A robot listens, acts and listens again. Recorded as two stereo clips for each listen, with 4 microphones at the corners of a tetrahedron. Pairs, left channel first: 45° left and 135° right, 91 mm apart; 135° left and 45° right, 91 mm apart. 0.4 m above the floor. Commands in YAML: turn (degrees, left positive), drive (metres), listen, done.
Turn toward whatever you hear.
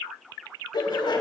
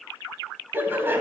turn: 20
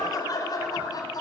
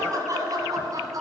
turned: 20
done: "Found it: laughter, straight ahead, 2 to 4 m away."